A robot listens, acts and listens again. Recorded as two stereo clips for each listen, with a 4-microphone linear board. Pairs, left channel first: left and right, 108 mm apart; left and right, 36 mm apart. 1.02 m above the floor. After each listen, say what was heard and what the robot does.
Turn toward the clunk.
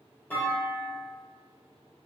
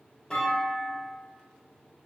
The clunk: about 15° left or 165° left. Turn 15° left.
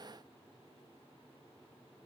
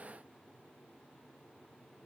Keep listening.
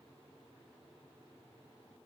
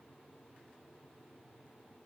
I heard a clunk, but can't make it out now. It was about straight ahead or 150° left.